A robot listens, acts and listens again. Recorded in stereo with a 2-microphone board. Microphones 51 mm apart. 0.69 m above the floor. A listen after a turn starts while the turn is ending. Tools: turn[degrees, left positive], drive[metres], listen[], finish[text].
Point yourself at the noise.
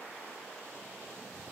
Action: listen[]
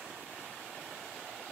Action: listen[]
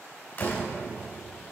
Thought: The door slam: about 40° left or 140° left.
Action: turn[40]
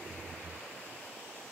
Action: listen[]
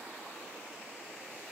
Action: finish[I heard a door slam, but can't make it out now. It was about straight ahead or 100° left.]